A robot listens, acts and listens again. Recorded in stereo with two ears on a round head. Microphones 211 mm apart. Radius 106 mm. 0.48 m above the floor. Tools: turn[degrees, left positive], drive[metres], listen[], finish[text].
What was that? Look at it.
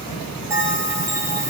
Action: turn[-30]
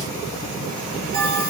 Thought: So it is at 135° right.
Action: turn[-135]
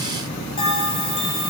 Thought: The bell is now 25° left.
Action: turn[25]
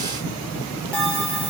Action: finish[Facing the bell, 2 to 4 m away.]